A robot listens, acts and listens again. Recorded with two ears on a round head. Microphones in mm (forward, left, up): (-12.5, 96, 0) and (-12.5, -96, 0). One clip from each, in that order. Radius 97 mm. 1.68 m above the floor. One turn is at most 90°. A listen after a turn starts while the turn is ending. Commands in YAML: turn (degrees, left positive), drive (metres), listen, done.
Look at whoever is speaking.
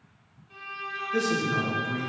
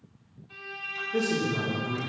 turn: 30
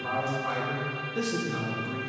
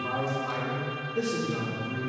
turn: 90
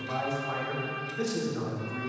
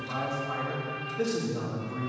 turn: 70
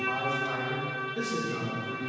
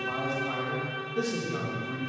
turn: 20
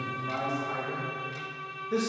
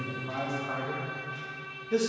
done: "Found it: a man speaking, straight ahead."